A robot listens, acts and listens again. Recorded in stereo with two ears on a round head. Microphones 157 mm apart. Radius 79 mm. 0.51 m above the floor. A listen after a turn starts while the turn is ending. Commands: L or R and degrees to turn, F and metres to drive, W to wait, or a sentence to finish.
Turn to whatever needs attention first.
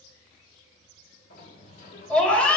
L30
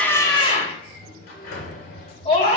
L140
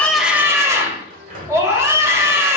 R20
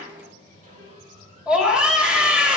Found it: a scream, straight ahead, 1 to 2 m away.